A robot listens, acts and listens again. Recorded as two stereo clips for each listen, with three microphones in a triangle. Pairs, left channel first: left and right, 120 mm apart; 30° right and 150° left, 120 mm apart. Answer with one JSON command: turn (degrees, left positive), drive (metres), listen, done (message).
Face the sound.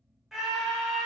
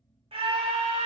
{"turn": -175}
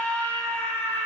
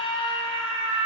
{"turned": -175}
{"turn": 15}
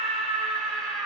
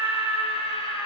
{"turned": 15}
{"done": "Facing the scream, under 1 m away."}